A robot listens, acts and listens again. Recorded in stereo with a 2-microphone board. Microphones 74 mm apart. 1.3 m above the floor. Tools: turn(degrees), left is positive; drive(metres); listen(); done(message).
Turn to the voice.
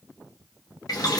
listen()
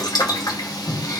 listen()
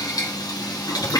done("I can't make out anyone speaking to turn to.")